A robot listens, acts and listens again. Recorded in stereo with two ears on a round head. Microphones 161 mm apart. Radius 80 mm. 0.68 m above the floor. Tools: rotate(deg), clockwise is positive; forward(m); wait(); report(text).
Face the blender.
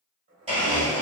rotate(35)
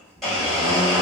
report("Facing the blender.")